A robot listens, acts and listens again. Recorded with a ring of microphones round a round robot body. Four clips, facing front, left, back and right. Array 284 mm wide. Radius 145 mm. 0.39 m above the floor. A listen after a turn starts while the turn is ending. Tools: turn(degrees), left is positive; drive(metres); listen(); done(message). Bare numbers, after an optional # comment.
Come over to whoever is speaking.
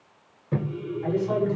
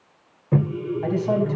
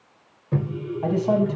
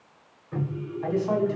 # The man speaking: 145° left.
turn(145)
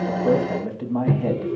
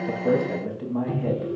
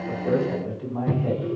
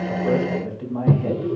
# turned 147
drive(1.0)
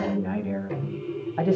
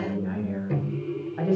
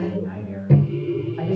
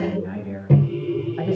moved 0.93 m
drive(1.0)
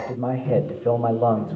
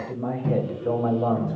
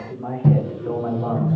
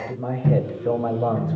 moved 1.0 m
# The man speaking is now 10° right.
turn(-10)
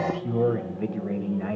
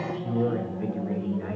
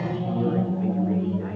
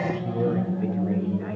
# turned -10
drive(1.0)
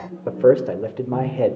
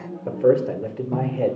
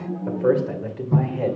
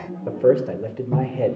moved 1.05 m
drive(1.0)
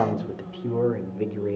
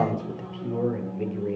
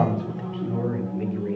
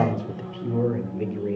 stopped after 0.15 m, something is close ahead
# The man speaking is now 10° right.
turn(-10)
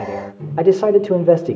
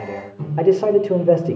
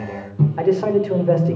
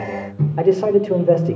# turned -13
done("I am next to the man speaking.")